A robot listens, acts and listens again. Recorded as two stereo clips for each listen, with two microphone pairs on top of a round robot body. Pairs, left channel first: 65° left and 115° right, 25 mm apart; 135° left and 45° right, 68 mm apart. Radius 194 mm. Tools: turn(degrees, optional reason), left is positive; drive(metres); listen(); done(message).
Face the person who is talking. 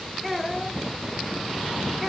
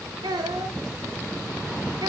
turn(degrees=-25, reason="The child speaking: 25° right.")
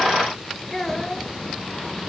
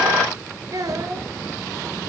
turn(degrees=-10, reason="The child speaking is now 10° right.")
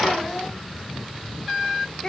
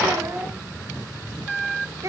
done("Found it: a child speaking, straight ahead, 1 to 2 m away.")